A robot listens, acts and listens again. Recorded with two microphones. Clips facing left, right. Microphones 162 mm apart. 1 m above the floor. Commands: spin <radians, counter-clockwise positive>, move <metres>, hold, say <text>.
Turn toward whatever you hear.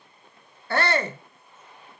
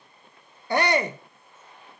spin -0.26
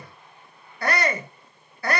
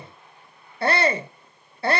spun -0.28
spin -2.71
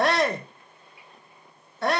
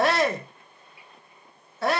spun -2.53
say Found it: a shout, straight ahead, 1 to 2 m away.